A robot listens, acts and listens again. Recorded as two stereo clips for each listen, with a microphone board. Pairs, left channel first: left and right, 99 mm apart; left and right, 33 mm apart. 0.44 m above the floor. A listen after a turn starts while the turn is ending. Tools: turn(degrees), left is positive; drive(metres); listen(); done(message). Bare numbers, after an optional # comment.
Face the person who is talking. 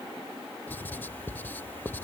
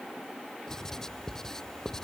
listen()
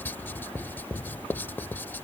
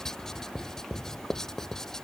listen()
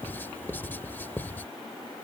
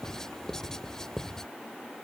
done("I can't make out anyone speaking, only writing.")